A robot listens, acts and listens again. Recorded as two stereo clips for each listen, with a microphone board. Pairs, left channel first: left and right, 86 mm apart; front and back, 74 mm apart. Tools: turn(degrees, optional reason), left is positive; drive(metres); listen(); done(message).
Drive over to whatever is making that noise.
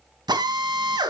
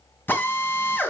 turn(degrees=-60, reason="The drill: 60° right.")
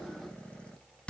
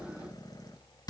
turn(degrees=15, reason="The drill is now 15° left.")
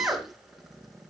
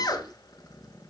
drive(metres=1.0)
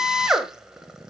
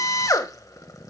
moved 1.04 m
turn(degrees=-10, reason="The drill is now 10° right.")
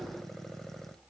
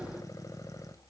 listen()
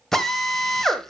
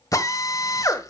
drive(metres=1.0)
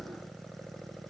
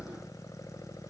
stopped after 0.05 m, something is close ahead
listen()
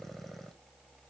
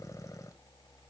listen()
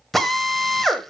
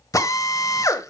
done("I am next to the drill.")